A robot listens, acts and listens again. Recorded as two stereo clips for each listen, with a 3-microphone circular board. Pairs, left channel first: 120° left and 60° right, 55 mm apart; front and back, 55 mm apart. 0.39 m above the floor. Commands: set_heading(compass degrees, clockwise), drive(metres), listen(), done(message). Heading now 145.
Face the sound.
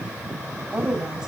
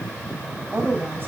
set_heading(280)
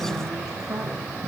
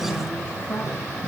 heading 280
listen()
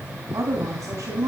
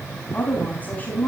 set_heading(335)
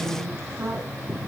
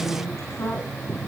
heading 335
set_heading(355)
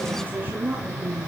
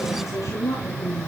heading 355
set_heading(5)
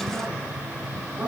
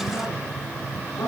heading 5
done("Facing the woman speaking, over 4 m away.")